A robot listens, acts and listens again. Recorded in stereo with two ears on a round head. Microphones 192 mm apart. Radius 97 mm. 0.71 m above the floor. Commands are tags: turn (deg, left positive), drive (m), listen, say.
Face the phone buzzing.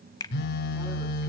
<turn deg="55"/>
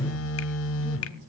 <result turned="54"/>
<turn deg="70"/>
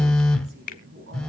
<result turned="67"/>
<say>Found it: a phone buzzing, straight ahead.</say>